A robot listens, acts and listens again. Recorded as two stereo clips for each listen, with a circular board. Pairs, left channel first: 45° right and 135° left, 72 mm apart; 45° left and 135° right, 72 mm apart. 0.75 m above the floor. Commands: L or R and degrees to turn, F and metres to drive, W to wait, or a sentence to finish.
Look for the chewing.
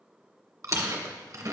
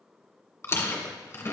L95
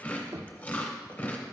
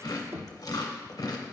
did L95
L20
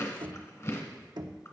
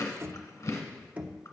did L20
Facing the chewing, 1 to 2 m away.